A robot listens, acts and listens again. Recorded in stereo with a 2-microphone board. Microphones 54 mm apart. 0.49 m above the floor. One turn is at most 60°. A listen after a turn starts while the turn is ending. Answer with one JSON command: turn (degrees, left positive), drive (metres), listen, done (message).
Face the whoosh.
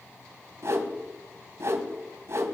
{"turn": -55}
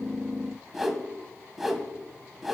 {"done": "Found it: a whoosh, straight ahead."}